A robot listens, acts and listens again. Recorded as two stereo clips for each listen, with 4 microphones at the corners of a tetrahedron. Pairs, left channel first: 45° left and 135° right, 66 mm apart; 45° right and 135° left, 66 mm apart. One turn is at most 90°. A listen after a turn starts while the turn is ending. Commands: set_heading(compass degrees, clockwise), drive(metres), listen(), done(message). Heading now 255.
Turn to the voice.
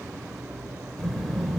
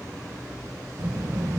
set_heading(165)
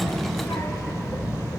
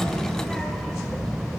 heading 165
set_heading(120)
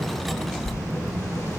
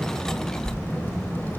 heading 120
set_heading(110)
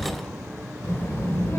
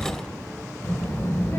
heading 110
done("Found it: a child speaking, straight ahead.")